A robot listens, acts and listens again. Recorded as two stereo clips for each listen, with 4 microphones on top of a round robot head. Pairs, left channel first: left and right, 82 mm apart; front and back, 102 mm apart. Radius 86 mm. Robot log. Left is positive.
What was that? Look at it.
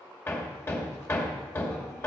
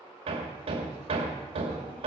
note: The hammering: 150° left.
cmd yaw +150
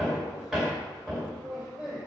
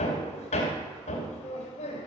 end: Found it: hammering, straight ahead, 2 to 4 m away.